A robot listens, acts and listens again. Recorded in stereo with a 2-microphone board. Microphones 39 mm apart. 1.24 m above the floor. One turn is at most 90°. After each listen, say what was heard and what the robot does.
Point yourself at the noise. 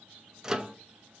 The microwave: about 15° right or 165° right. Turn 15° right.
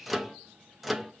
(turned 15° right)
Found it: a microwave, straight ahead.